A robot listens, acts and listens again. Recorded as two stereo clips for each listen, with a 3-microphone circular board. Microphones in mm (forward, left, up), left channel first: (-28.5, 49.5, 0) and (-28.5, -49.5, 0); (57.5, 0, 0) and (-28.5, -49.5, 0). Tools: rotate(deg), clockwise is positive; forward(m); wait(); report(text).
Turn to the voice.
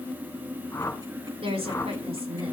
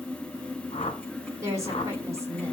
rotate(90)
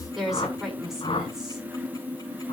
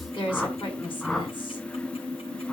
report("Facing the woman speaking, over 4 m away.")